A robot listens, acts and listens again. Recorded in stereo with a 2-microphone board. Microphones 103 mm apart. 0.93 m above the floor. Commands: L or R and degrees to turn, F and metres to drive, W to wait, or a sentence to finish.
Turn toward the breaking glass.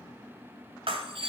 R55
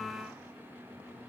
W
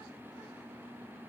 I heard breaking glass, but can't make it out now. It was about straight ahead or 70° right.